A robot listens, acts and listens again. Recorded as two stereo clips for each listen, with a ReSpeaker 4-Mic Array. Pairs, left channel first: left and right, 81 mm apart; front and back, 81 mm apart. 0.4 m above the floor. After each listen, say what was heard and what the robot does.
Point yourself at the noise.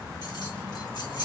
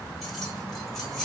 The keys jangling: 90° left. Turn 90° left.
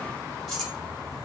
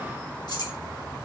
Facing the keys jangling, 1 to 2 m away.